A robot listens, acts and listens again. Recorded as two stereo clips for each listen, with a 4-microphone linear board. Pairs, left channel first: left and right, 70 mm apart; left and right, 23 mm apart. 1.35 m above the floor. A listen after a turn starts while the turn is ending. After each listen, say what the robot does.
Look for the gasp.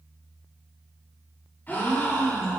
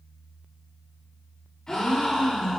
Turn 30° left.
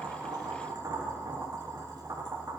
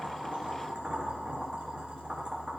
Keep listening.
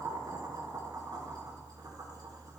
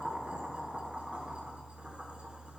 I heard a gasp, but can't make it out now. It was about straight ahead or 120° left.